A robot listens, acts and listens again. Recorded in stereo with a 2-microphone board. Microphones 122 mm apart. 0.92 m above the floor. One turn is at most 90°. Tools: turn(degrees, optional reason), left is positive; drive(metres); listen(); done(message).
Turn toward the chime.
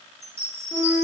turn(degrees=-60, reason="The chime: about 60° right or 120° right.")
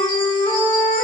listen()
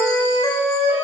listen()
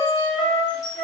turn(degrees=-40, reason="So it is at 40° right.")
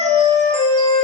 listen()
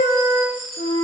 done("Facing the chime.")